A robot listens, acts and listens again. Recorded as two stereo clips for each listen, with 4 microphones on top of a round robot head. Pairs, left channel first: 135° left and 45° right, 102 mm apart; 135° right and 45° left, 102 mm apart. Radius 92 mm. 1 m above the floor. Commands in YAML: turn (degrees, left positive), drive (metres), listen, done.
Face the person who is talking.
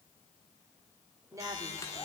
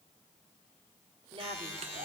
turn: 10
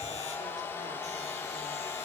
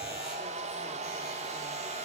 listen: true
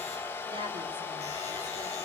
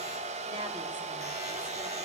listen: true
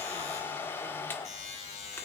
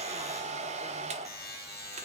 done: "I heard a woman speaking from this way, but can't make it out now."